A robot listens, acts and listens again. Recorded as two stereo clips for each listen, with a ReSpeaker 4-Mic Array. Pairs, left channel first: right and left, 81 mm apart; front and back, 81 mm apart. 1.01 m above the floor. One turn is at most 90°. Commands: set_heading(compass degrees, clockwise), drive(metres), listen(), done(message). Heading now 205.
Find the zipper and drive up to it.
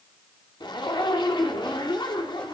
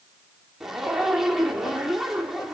set_heading(295)
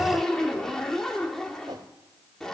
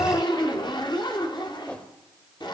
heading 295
drive(1.0)
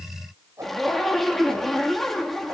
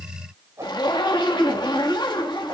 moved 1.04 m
drive(1.0)
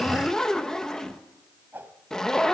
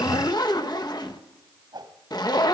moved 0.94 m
set_heading(305)
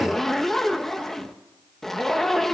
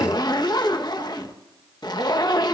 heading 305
drive(1.0)
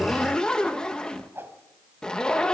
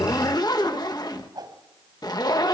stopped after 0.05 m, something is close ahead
set_heading(315)
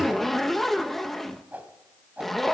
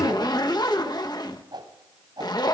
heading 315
done("Arrived at the zipper, straight ahead.")